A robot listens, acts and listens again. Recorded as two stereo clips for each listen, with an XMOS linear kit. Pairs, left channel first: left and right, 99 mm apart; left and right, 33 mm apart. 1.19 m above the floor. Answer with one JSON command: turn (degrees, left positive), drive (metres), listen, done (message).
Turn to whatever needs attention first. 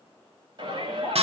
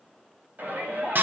{"turn": -50}
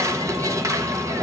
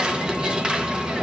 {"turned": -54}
{"listen": true}
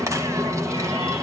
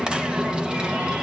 {"listen": true}
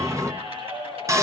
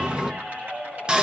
{"turn": -75}
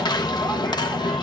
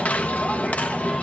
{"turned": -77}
{"listen": true}
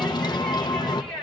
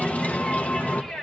{"done": "Facing the shout."}